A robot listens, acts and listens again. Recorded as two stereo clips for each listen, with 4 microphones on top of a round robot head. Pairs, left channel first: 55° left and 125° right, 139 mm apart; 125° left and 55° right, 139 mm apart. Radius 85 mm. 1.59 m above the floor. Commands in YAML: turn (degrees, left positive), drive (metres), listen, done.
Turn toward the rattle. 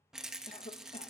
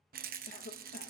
turn: -40
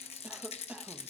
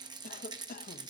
turn: 10
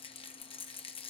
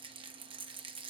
done: "Facing the rattle, under 1 m away."